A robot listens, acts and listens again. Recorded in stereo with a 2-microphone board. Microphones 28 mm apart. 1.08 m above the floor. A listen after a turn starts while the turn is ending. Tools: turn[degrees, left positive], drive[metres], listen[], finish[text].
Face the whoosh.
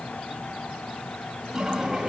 Action: listen[]
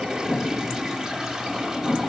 Thought: The whoosh: about 40° left or 140° left.
Action: turn[40]
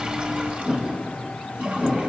Action: finish[Facing the whoosh, over 4 m away.]